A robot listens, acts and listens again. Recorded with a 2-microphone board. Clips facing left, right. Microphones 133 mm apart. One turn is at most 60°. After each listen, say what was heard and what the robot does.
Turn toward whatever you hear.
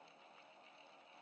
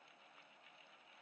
Keep listening.
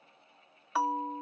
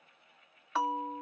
Turn 30° left.
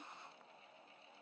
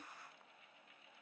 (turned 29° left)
Keep listening.
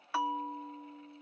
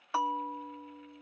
So it is at 25° right. Turn 25° right.
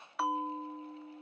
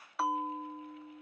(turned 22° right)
Facing the bell, under 1 m away.